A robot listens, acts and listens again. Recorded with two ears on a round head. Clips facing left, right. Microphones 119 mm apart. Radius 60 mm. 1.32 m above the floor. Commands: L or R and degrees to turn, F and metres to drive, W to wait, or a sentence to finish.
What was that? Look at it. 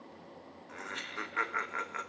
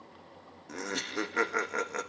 R45
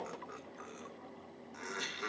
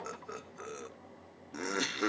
R80
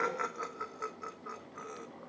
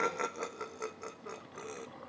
R30
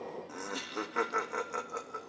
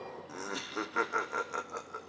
Facing the laughter.